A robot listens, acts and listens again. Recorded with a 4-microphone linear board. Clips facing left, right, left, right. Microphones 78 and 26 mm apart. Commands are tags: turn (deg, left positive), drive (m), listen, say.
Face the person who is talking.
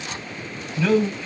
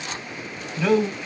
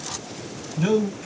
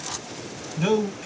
<turn deg="-30"/>
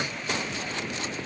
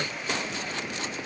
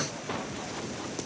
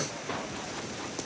<listen/>
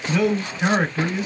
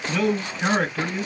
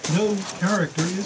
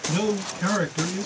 <turn deg="15"/>
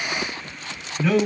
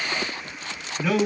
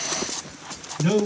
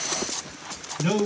<say>Facing the man speaking, 2 to 4 m away.</say>